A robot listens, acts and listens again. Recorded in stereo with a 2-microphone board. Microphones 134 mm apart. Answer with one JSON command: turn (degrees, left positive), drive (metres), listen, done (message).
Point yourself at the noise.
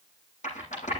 {"turn": 65}
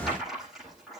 {"done": "Facing the rattle."}